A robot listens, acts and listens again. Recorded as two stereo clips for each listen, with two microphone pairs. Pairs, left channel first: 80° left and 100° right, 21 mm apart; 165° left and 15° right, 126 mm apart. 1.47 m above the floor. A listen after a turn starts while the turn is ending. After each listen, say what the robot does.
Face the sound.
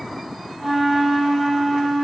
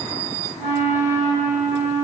Turn 15° right.
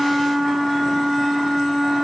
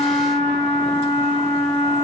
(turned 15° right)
Facing the flute.